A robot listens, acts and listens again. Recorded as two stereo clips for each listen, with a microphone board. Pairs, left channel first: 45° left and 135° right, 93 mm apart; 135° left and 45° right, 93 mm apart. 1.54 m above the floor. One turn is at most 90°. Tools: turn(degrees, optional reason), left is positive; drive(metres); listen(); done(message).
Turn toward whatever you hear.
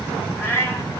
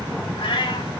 turn(degrees=90, reason="The cat meowing: 105° left.")
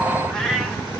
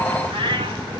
turn(degrees=-40, reason="The cat meowing is now 40° right.")
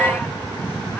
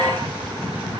listen()
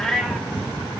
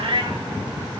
turn(degrees=-40, reason="The cat meowing is now 40° right.")
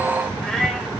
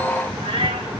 turn(degrees=-35, reason="The cat meowing is now 35° right.")
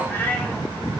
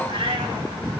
turn(degrees=-25, reason="The cat meowing is now 25° right.")
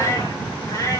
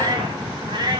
turn(degrees=-10, reason="The cat meowing is now 10° right.")
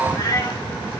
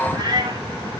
done("Facing the cat meowing, 2 to 4 m away.")